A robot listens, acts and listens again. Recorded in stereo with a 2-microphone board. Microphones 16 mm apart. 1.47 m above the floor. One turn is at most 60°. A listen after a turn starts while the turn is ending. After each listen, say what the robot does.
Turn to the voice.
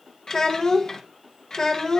Turn 40° left.
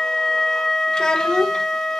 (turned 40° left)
Keep listening.
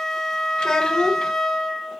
Turn 60° left.
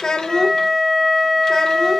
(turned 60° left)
Turn 35° left.
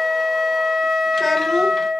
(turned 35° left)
Keep listening.
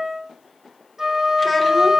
Facing where the child speaking came from. I can't hear it now.